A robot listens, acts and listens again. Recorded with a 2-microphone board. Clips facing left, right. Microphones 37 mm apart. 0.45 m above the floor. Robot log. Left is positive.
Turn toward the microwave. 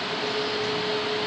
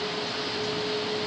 cmd idle
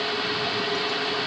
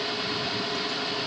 cmd idle
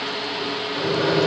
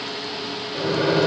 cmd yaw -30
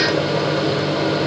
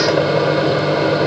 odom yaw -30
note: So it is at 150° right.
cmd yaw -150
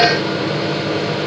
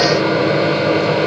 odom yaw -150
note: The microwave is now 45° right.
cmd yaw -45
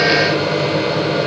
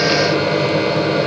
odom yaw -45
note: The microwave is now 10° right.
cmd yaw -10
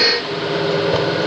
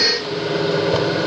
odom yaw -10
end: Found it: a microwave, straight ahead.